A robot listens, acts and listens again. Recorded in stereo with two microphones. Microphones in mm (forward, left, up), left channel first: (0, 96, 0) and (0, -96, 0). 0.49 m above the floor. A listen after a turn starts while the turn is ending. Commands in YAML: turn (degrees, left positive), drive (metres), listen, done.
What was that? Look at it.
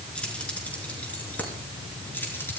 turn: 30
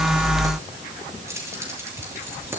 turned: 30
turn: -15
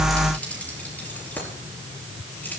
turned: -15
turn: 10
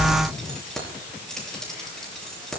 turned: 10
done: "Facing the keys jangling, over 4 m away."